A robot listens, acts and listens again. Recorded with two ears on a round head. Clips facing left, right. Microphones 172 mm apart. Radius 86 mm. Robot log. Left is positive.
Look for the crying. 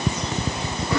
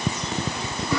cmd idle
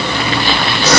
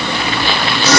cmd idle
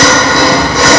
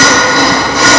end: I can't make out crying to turn to.